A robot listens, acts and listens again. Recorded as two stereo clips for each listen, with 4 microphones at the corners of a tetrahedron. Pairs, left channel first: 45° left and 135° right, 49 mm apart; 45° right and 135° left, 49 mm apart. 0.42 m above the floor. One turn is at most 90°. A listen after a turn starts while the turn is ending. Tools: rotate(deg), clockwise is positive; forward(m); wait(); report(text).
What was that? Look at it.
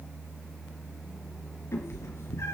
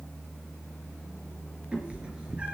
rotate(-65)
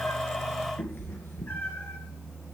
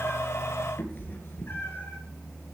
report("Facing the cat meowing, 2 to 4 m away.")